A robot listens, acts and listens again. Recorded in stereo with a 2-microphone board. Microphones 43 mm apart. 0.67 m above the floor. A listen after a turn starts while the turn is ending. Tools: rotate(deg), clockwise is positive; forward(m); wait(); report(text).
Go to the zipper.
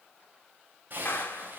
rotate(45)
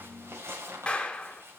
rotate(90)
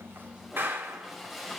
forward(1.0)
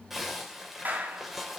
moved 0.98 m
forward(1.0)
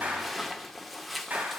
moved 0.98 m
forward(1.0)
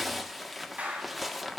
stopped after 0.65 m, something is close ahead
report("Arrived at the zipper, straight ahead.")